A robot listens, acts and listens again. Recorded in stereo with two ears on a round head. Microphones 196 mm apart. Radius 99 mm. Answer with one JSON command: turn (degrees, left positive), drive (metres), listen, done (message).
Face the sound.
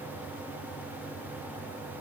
{"listen": true}
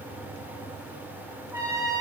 {"turn": -15}
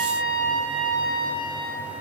{"turn": -150}
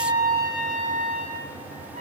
{"turn": -35}
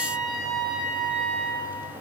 {"done": "Facing the trumpet, 1 to 2 m away."}